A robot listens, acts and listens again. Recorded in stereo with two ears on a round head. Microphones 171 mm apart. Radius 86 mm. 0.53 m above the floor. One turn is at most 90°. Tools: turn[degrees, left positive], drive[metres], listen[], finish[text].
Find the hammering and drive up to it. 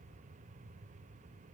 Action: listen[]
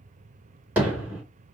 Action: turn[-30]
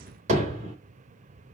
Thought: So it is at 140° right.
Action: turn[-90]
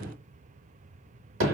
Thought: The hammering is now 85° right.
Action: turn[-85]
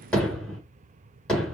Action: drive[1.0]
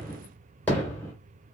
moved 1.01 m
Thought: The hammering is now 10° left.
Action: turn[10]
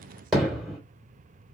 Action: drive[1.0]
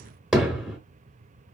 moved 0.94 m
Action: drive[1.0]
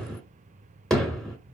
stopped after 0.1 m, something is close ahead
Action: finish[Arrived at the hammering, straight ahead.]